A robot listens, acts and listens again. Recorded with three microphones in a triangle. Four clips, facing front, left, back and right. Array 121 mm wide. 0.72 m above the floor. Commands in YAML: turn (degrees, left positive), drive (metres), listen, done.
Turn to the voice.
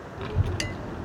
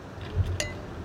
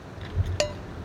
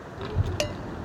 turn: -40
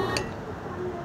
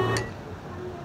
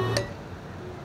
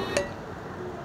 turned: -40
done: "Facing the child speaking, under 1 m away."